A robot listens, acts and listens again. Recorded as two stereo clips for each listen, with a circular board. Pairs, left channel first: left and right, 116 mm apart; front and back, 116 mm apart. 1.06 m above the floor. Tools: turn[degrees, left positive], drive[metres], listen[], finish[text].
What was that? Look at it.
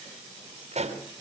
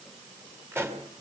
Thought: The pop: 110° right.
Action: turn[-110]
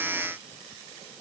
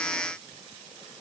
Action: finish[I heard a pop from this way, but can't make it out now.]